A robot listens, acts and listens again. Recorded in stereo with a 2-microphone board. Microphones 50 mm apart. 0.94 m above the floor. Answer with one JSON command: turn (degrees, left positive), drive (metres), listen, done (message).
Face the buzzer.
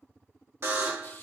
{"turn": -55}
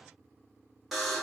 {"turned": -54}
{"done": "Facing the buzzer."}